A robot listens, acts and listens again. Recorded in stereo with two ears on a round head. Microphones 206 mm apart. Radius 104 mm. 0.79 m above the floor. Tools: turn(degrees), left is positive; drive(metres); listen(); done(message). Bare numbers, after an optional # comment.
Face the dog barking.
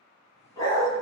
# The dog barking: about 20° left or 160° left.
turn(20)
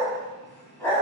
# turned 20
turn(30)
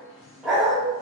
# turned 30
done("Found it: a dog barking, straight ahead, 1 to 2 m away.")